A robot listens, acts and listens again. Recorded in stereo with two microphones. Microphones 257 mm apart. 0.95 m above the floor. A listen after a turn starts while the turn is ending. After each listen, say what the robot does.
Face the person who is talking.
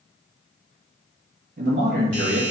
Turn 40° right.
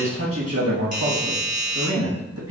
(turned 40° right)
Turn 95° right.
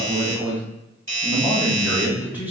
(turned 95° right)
Turn 10° right.
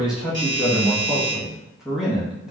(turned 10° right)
Found it: a man speaking, straight ahead.